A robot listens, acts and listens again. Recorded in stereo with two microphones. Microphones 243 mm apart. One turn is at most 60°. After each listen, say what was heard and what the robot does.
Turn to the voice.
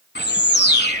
Keep listening.
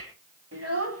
Turn 60° right.
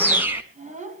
So it is at 30° right. Turn 30° right.
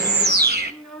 Facing the child speaking.